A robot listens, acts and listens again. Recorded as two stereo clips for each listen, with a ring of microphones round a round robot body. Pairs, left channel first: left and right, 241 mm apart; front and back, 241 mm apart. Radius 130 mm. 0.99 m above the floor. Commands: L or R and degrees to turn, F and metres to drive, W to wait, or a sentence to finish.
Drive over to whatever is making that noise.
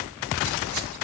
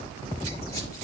R75
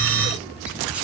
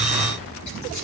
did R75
W
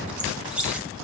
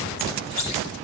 F1.0
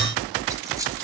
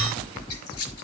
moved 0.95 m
R15
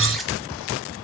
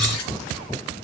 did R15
F1.0
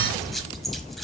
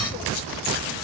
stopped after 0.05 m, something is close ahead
Arrived at the squeak, straight ahead.